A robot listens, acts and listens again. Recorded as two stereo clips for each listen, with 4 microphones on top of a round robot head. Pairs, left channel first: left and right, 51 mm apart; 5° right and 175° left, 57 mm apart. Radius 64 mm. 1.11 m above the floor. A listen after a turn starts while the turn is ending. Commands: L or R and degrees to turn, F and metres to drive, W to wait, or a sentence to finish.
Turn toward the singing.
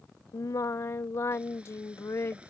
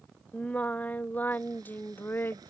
L45
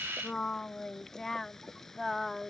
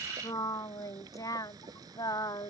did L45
Facing the singing.